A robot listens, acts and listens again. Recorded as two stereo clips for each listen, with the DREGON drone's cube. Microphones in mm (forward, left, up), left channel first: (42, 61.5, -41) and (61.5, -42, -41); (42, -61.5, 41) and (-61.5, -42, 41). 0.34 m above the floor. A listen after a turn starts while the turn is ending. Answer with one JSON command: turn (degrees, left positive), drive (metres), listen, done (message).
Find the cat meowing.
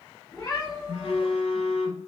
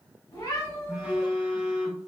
{"turn": 50}
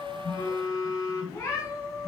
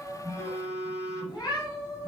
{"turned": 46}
{"turn": 45}
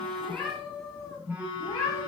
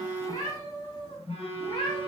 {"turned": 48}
{"turn": 20}
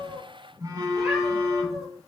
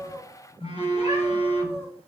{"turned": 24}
{"done": "Facing the cat meowing."}